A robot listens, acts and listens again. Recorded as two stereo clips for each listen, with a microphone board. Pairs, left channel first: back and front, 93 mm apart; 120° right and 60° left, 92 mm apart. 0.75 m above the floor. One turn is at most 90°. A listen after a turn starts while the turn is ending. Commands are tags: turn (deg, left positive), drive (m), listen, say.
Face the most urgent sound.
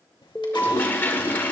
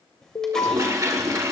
<turn deg="-90"/>
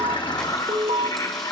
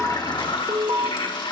<say>Facing the alarm.</say>